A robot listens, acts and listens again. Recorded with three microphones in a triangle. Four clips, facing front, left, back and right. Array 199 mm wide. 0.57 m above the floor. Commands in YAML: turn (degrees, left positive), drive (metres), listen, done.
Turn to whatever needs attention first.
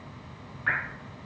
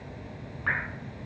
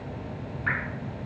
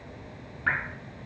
listen: true
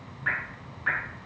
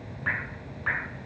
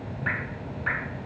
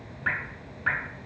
listen: true
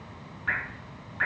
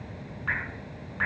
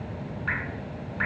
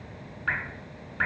done: "I can't make out anything urgent, only dripping."